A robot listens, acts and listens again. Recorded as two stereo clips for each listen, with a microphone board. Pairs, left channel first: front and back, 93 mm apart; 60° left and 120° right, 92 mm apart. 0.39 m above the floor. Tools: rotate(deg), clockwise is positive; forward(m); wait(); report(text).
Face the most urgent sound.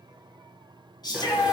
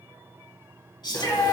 rotate(-30)
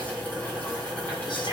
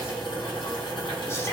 wait()
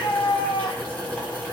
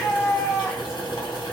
report("Facing the shout, 2 to 4 m away.")